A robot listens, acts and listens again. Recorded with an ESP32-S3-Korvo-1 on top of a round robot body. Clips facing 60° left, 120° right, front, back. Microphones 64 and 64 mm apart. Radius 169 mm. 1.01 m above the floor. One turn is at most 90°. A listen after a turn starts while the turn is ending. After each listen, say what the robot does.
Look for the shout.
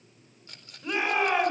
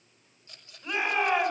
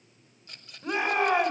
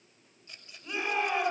Turn 30° right.
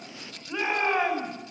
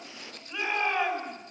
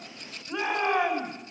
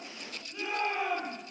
Facing the shout, over 4 m away.